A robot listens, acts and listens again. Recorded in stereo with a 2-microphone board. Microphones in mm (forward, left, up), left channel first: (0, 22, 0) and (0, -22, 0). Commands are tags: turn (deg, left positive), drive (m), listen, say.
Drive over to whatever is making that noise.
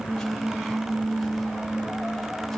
<listen/>
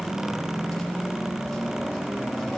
<listen/>
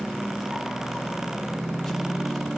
<say>I can't make out anything.</say>